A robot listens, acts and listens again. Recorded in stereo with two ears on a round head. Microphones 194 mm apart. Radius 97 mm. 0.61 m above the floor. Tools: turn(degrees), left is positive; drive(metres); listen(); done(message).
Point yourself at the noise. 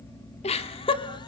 turn(degrees=25)
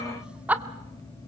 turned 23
turn(degrees=-10)
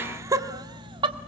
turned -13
turn(degrees=-25)
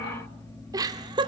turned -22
turn(degrees=-20)
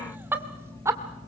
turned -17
turn(degrees=-15)
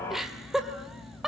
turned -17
done("Found it: laughter, straight ahead, 2 to 4 m away.")